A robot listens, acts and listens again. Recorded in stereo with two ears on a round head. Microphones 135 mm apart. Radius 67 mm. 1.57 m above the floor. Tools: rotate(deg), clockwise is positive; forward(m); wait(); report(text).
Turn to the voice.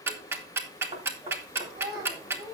rotate(90)
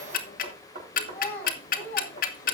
rotate(-10)
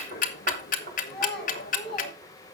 report("Facing the child speaking.")